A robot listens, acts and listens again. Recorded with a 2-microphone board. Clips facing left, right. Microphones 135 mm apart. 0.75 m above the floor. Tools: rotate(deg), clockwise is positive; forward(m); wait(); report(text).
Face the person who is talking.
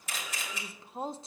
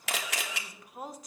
rotate(-25)
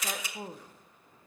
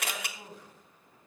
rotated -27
rotate(-125)
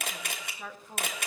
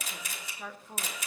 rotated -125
report("Facing the woman speaking.")